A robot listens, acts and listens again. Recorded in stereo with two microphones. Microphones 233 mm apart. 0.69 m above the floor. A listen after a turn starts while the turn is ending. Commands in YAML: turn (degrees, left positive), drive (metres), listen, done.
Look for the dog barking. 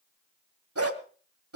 turn: -90
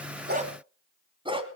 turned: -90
turn: -20
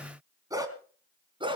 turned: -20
turn: -20
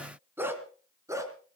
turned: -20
turn: -15
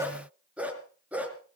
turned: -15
done: "Facing the dog barking."